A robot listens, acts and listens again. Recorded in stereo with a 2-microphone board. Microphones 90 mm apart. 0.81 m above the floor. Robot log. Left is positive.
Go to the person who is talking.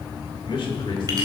note: The man speaking: about 65° left or 115° left.
cmd yaw +65
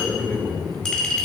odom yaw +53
note: So it is at 15° left.
cmd yaw +15
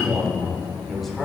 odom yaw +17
cmd fwd 1.0
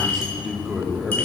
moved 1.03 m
cmd fwd 1.0
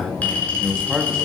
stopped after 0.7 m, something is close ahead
end: Arrived at the man speaking, straight ahead.